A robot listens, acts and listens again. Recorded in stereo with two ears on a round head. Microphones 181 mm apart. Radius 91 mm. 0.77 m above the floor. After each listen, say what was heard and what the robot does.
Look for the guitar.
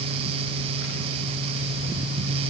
Keep listening.
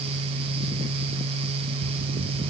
Keep listening.
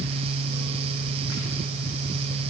I can't make out a guitar to turn to.